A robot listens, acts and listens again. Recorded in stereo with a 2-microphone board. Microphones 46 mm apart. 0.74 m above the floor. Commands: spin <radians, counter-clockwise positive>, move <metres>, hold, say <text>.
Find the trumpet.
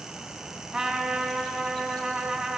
spin -0.44
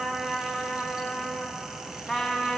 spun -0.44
say Found it: a trumpet, straight ahead, 2 to 4 m away.